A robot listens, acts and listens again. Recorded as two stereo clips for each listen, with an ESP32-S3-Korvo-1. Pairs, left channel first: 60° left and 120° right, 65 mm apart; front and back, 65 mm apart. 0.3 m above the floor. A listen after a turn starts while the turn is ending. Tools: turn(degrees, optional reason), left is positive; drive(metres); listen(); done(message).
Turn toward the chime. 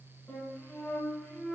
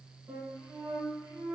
listen()
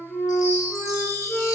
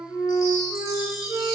turn(degrees=30, reason="The chime: 30° left.")
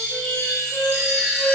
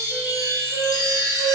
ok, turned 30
done("Found it: a chime, straight ahead, under 1 m away.")